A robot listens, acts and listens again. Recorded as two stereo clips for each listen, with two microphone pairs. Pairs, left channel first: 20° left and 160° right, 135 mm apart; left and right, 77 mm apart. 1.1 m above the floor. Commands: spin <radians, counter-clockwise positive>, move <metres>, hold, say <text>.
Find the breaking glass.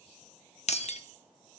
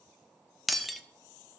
say Found it: breaking glass, straight ahead, under 1 m away.